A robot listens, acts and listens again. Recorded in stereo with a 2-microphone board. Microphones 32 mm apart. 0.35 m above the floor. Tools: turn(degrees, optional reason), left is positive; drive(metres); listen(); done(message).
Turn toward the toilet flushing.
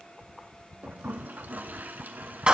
turn(degrees=-75, reason="The toilet flushing: about 75° right or 105° right.")
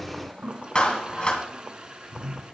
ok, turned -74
turn(degrees=-30, reason="So it is at 30° right.")
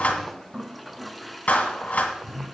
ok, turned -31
done("Facing the toilet flushing.")